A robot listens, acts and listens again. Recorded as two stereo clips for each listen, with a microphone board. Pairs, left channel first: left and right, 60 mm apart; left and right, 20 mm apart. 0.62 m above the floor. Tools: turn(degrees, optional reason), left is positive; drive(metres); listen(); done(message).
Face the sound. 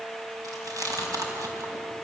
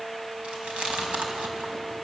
turn(degrees=-90)
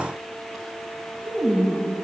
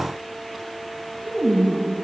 done("Found it: chewing, straight ahead.")